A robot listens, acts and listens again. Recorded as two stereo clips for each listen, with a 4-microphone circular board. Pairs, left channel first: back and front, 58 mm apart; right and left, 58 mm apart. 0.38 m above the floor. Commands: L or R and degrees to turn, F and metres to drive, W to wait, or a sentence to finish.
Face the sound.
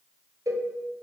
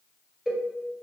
Facing the cowbell.